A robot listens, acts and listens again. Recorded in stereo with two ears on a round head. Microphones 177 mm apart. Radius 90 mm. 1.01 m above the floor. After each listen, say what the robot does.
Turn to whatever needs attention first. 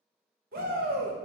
Turn 45° right.
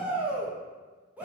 Turn 10° right.
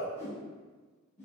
Found it: a shout, straight ahead.